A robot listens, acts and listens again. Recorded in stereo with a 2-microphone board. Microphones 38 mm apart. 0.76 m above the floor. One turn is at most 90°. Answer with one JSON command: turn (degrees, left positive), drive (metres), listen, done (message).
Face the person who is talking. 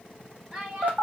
{"turn": -20}
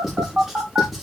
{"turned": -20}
{"listen": true}
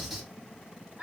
{"turn": -90}
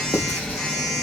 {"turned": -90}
{"turn": -45}
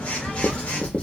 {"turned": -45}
{"listen": true}
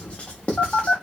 {"done": "Facing where the child speaking came from. I can't hear it now."}